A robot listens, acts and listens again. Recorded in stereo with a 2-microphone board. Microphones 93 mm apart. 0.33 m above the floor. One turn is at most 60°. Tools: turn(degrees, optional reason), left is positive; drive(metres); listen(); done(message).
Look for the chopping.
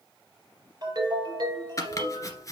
turn(degrees=35, reason="The chopping: about 35° left or 145° left.")
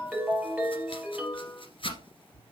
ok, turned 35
turn(degrees=60, reason="So it is at 110° left.")
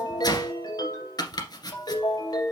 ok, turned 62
turn(degrees=45, reason="The chopping is now 45° left.")
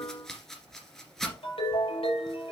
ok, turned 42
done("Facing the chopping, 1 to 2 m away.")